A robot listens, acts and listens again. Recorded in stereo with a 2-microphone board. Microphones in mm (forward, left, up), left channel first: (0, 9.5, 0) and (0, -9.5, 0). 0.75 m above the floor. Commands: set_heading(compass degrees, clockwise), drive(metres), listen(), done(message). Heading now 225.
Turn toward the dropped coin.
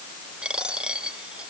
set_heading(300)
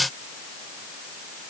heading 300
listen()
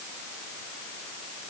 done("I heard a dropped coin, but can't make it out now. It was about straight ahead or 30° right.")